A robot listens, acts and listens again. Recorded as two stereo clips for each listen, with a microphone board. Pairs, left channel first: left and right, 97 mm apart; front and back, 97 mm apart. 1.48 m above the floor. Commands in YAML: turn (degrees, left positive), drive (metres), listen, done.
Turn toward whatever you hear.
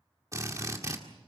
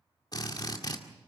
turn: -40
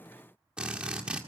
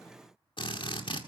turn: -10
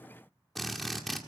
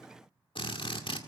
done: "Found it: a drill, straight ahead, 1 to 2 m away."